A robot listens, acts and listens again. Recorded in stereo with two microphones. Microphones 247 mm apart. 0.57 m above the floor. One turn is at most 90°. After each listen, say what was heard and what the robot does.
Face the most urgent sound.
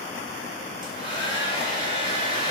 Keep listening.
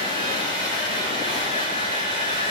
Keep listening.
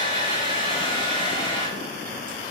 I can't make out anything urgent to turn to.